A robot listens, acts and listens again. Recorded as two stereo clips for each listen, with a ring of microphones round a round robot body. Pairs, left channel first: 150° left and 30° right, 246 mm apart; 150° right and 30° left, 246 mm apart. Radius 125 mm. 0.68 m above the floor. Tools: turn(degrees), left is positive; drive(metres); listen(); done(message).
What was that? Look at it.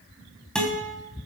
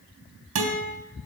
turn(degrees=65)
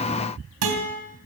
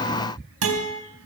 done("Facing the guitar.")